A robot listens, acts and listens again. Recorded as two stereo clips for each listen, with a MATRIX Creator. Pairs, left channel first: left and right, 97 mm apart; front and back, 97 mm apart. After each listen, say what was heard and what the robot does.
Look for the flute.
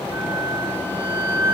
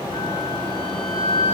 The flute: 25° right. Turn 25° right.
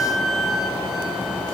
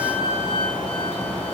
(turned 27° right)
Facing the flute.